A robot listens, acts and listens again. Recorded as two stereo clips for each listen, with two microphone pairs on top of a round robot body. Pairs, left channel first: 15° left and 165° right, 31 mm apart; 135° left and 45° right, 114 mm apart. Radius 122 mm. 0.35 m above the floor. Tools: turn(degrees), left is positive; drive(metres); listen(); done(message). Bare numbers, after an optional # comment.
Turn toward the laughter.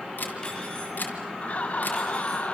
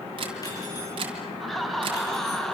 # The laughter: 50° left.
turn(50)
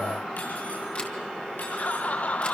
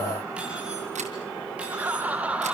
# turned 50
# The laughter is now 35° left.
turn(35)
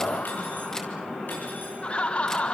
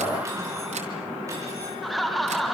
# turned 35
# The laughter is now 50° left.
turn(50)
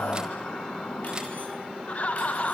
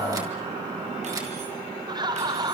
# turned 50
done("Facing the laughter, 2 to 4 m away.")